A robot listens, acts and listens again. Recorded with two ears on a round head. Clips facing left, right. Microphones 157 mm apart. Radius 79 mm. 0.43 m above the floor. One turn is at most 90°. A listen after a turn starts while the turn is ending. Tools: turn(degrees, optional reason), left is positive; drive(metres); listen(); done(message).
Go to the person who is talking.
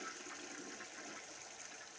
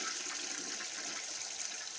listen()
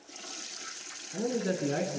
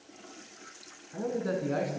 turn(degrees=25, reason="The man speaking: about 25° left or 155° left.")
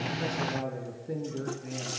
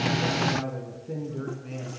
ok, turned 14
turn(degrees=10, reason="So it is at 10° left.")
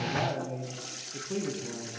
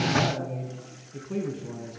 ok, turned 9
drive(metres=1.0)
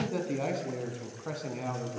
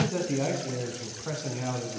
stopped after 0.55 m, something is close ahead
done("Something is in my way. I am facing the man speaking but have not reached it.")